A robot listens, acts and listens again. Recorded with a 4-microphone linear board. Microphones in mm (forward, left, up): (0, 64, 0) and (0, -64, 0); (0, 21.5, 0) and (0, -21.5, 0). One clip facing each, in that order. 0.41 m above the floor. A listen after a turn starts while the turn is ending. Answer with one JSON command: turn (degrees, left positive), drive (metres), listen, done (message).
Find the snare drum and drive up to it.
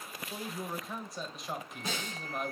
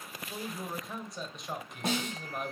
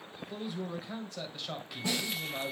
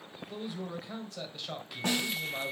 {"turn": -70}
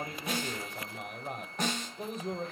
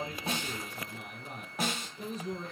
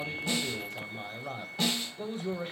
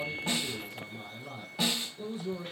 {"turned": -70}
{"drive": 1.0}
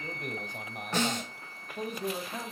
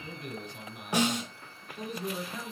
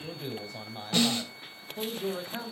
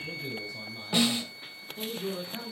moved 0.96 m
{"turn": -15}
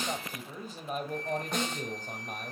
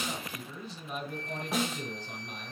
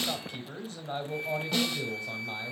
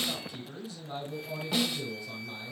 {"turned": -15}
{"drive": 1.0}
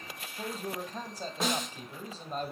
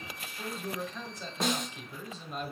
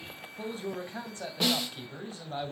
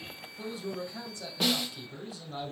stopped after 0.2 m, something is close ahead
{"done": "I am next to the snare drum."}